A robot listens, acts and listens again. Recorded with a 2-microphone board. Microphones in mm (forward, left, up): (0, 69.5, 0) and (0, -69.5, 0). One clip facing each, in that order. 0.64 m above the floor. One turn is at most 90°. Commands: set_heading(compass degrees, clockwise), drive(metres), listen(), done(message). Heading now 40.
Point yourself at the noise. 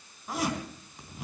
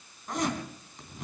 set_heading(10)
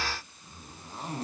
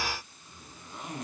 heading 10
set_heading(280)
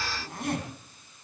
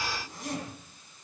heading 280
set_heading(220)
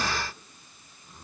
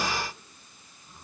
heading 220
done("Facing the zipper, 2 to 4 m away.")